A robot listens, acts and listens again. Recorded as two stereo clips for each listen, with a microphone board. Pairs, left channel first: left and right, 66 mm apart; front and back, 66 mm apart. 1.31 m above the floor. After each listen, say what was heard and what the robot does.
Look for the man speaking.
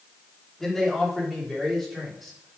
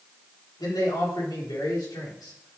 Facing the man speaking.